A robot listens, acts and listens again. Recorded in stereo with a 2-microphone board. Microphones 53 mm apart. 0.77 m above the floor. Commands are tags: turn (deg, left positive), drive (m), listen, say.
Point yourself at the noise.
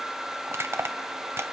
<turn deg="-55"/>
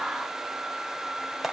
<say>Facing the crushing, 1 to 2 m away.</say>